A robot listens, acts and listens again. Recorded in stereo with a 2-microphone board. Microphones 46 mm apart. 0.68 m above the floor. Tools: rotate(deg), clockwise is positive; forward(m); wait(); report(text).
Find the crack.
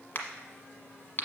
rotate(-40)
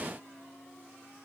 wait()
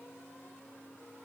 report("I heard a crack, but can't make it out now. It was about straight ahead or 100° left.")